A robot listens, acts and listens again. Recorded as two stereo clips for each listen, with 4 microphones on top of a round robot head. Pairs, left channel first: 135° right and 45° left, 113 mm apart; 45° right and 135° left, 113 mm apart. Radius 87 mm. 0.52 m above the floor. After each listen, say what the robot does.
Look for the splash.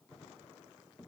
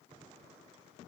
Keep listening.
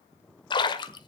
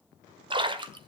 Turn 180° left.
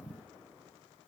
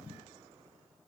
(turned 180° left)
I heard a splash from this way, but can't make it out now.